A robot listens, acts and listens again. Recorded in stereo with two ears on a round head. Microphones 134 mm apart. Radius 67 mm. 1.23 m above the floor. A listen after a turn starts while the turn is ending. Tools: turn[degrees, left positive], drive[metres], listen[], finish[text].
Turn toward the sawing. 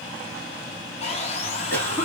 Thought: The sawing: about 40° left or 140° left.
Action: turn[40]
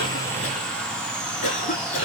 Action: finish[Facing the sawing, 1 to 2 m away.]